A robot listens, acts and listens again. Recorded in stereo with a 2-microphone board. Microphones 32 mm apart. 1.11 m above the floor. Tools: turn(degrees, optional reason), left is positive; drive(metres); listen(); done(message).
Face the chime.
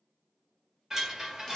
turn(degrees=-15, reason="The chime: about 15° right or 165° right.")
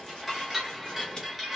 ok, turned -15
done("Facing the chime, 1 to 2 m away.")